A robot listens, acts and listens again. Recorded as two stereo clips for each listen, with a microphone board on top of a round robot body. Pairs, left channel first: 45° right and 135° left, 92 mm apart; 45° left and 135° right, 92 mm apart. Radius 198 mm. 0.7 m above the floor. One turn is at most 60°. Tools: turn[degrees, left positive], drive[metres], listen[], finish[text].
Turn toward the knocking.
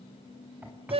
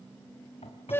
Thought: The knocking: 60° left.
Action: turn[60]
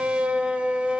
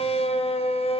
Action: listen[]
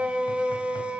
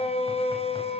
Action: listen[]
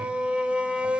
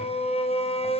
Action: finish[Facing where the knocking came from. I can't hear it now.]